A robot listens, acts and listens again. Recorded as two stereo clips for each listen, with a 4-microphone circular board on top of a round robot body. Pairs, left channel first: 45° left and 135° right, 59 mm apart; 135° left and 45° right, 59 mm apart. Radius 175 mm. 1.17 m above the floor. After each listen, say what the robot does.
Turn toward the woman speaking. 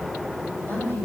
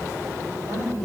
Turn 10° right.
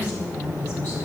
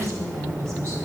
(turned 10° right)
Facing the woman speaking, over 4 m away.